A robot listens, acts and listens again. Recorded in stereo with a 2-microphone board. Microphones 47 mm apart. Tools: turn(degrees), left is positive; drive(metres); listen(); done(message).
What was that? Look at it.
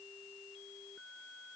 listen()
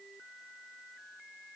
listen()
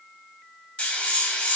turn(degrees=25)
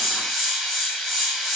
done("Facing the hiss.")